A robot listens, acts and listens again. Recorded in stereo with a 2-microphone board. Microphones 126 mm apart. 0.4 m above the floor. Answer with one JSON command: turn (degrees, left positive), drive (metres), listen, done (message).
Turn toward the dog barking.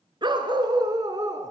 {"turn": -30}
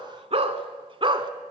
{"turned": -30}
{"turn": -40}
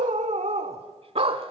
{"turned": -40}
{"turn": -130}
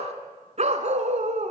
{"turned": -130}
{"turn": -70}
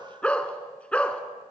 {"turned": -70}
{"turn": 10}
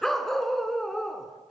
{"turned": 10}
{"done": "Found it: a dog barking, straight ahead, 1 to 2 m away."}